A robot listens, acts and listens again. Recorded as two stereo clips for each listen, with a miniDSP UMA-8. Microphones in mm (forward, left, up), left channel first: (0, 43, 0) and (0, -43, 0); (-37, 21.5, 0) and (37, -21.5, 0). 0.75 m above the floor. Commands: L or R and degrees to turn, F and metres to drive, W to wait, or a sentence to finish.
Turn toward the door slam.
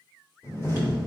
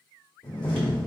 L150
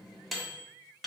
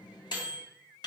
Facing where the door slam came from. I can't hear it now.